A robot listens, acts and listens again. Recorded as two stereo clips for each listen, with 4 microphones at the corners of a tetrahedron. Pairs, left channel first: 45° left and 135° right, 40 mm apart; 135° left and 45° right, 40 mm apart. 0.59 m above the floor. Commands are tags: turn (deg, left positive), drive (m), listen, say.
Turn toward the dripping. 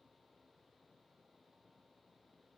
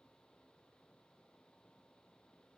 <listen/>
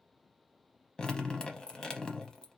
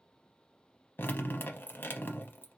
<turn deg="115"/>
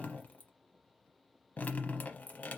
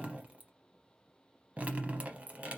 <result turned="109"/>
<say>Facing the dripping, under 1 m away.</say>